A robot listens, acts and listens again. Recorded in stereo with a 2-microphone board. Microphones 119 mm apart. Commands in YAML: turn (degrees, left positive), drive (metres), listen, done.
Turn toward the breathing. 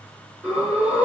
turn: -30
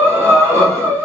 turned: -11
turn: -155
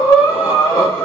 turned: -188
turn: 30
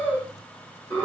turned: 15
turn: 15
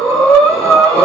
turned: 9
done: "Found it: breathing, straight ahead, 2 to 4 m away."